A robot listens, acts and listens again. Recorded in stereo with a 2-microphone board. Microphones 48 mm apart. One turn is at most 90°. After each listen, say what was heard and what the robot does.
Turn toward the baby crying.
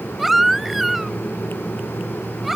Turn 30° right.
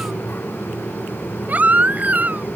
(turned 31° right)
So it is at 145° right. Turn 90° right.
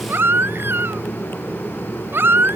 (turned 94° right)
The baby crying is now 50° right. Turn 50° right.
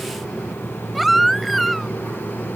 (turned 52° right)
Facing the baby crying.